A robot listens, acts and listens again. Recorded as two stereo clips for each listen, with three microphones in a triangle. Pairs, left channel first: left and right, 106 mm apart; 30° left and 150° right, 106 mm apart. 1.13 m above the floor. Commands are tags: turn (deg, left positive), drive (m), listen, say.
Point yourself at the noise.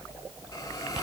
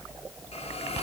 <turn deg="35"/>
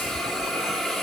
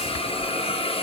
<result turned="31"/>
<say>Found it: a hiss, straight ahead.</say>